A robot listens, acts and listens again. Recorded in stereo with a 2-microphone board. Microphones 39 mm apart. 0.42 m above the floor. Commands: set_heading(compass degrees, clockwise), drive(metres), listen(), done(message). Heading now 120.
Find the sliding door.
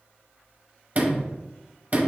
set_heading(160)
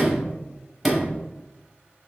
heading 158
done("Found it: a sliding door, straight ahead.")